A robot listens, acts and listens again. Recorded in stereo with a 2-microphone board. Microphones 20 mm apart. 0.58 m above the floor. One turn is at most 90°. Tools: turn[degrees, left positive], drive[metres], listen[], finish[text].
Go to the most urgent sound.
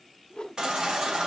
Thought: The baby crying: about 55° right or 125° right.
Action: turn[-55]
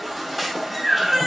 Action: drive[1.0]
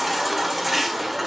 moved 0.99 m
Thought: The baby crying is now 10° right.
Action: turn[-10]
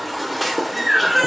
Action: drive[1.0]
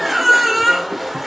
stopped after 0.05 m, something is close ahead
Action: finish[Arrived at the baby crying, straight ahead.]